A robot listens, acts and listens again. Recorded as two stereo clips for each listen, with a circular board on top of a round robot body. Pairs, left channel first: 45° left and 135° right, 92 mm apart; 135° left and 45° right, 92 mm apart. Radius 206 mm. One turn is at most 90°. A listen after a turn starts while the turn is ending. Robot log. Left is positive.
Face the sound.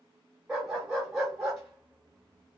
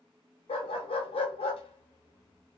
note: The dog barking: 140° left.
cmd yaw +90
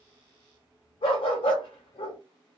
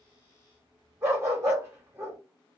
note: The dog barking is now 20° left.
cmd yaw +20
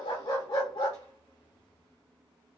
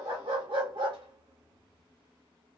end: Facing the dog barking.